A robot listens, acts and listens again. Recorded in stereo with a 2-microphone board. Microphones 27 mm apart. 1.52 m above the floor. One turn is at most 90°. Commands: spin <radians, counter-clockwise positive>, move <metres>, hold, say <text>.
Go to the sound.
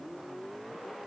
hold
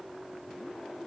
hold
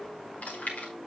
spin 1.57
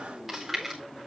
move 1.0
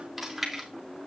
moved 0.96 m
spin -0.17
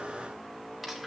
move 1.0
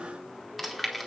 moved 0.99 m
move 1.0
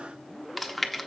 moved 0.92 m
move 1.0
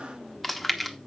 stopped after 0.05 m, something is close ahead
say I am next to the chewing.